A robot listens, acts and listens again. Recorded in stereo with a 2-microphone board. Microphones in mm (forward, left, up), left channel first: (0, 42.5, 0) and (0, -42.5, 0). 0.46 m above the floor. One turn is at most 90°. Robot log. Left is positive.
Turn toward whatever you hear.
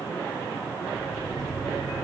cmd yaw +30
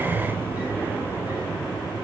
note: So it is at 20° right.
cmd yaw -20
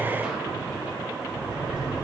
note: The sliding door is now 10° right.
cmd yaw -10
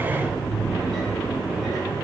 end: Facing the sliding door, 2 to 4 m away.